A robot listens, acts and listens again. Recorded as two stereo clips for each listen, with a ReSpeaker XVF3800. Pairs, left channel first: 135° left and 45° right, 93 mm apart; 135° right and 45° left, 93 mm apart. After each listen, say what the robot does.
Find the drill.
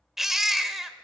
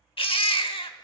Keep listening.
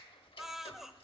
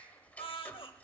Keep listening.
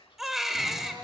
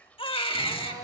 Found it: a drill, straight ahead, over 4 m away.